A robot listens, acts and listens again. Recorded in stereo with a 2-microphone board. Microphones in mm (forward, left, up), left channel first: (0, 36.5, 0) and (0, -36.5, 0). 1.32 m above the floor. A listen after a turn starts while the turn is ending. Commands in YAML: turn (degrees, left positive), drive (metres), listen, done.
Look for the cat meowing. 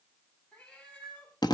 turn: 30
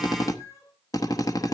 turn: 135
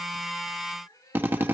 turn: 50
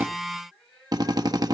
turn: 10
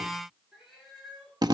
done: "Found it: a cat meowing, straight ahead, over 4 m away."